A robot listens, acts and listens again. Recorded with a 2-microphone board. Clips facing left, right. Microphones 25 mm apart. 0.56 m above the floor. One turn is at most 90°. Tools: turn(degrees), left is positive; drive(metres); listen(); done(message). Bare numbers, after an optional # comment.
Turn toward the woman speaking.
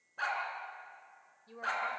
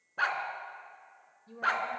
# The woman speaking: about 20° left or 160° left.
turn(20)
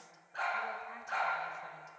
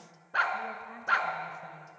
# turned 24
listen()
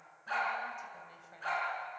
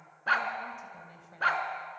turn(30)
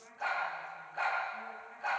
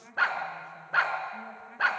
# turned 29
# So it is at 20° right.
turn(-20)
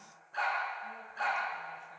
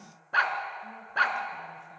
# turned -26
listen()
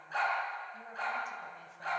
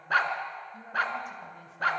listen()
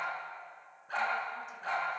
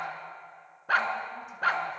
done("I heard a woman speaking from this way, but can't make it out now.")